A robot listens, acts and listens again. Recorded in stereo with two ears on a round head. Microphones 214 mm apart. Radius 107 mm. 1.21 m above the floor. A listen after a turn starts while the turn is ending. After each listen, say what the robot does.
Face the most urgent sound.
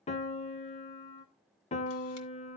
Keep listening.
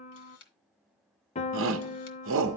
Turn 60° right.
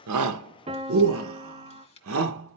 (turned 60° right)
Turn 65° right.
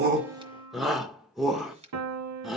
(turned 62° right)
Found it: a shout, straight ahead, under 1 m away.